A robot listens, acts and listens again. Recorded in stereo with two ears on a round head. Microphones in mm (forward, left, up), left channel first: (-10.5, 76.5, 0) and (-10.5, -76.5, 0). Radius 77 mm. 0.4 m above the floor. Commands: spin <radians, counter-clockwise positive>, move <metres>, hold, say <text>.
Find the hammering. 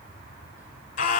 hold
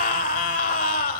hold
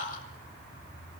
say I can't make out hammering to turn to.